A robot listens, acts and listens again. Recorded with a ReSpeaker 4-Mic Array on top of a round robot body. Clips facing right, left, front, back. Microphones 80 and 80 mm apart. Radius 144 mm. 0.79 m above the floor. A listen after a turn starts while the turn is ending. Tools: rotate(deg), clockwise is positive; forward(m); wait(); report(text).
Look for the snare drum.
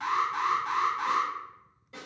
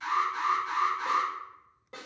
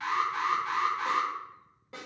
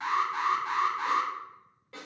rotate(-65)
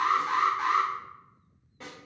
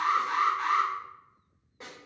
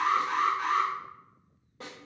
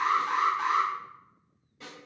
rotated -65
rotate(-20)
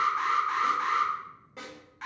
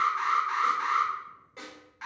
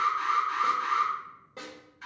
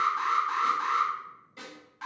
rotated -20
report("Found it: a snare drum, straight ahead.")